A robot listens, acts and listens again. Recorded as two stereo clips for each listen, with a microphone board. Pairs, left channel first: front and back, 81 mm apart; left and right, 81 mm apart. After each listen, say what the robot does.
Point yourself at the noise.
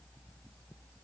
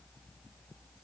Keep listening.
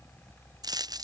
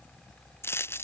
Turn 150° left.
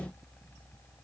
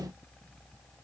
Facing where the dropped coin came from. I can't hear it now.